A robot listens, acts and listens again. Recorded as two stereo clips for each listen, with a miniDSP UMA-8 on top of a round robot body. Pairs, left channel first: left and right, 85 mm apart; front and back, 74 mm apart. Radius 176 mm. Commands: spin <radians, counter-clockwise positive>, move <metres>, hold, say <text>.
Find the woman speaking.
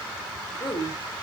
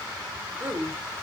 spin 2.01
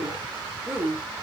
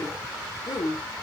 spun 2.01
spin -0.35
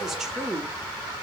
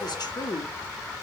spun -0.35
say Facing the woman speaking.